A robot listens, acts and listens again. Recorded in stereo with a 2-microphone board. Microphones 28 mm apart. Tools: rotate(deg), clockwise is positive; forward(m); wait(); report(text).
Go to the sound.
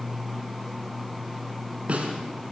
rotate(50)
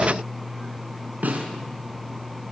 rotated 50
rotate(80)
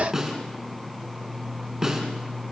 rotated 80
rotate(15)
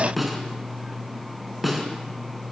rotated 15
forward(1.0)
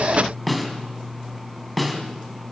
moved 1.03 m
forward(1.0)
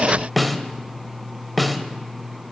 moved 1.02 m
forward(1.0)
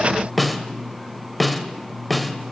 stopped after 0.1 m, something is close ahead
report("Arrived at the snare drum, straight ahead.")